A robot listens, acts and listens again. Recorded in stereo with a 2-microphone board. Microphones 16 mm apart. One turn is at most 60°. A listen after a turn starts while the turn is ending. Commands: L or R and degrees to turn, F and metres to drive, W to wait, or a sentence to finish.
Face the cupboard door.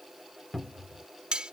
L30
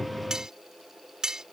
W
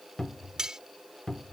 L60
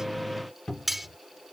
L60
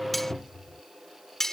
L60
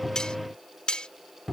L15
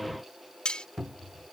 Found it: a cupboard door, straight ahead.